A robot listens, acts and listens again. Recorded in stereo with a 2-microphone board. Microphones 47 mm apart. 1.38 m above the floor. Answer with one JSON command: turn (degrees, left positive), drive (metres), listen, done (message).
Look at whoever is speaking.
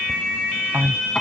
{"turn": -90}
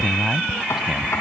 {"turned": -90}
{"turn": -10}
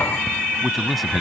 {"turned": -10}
{"done": "Found it: a man speaking, straight ahead."}